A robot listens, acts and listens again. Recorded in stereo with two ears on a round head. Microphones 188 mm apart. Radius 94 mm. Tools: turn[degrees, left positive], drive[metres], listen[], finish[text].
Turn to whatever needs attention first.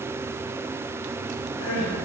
Action: turn[90]
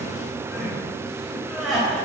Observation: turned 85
Action: finish[Found it: crying, straight ahead.]